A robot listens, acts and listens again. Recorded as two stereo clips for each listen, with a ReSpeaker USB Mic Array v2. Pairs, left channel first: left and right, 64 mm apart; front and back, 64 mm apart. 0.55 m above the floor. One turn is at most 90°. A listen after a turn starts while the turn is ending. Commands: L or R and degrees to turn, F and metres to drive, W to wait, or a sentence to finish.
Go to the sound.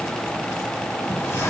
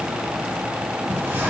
L90
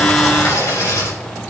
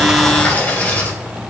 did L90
L65
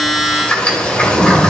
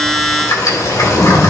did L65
L20
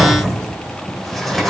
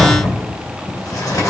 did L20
F1.0
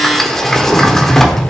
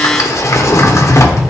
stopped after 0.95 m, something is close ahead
I am next to the sliding door.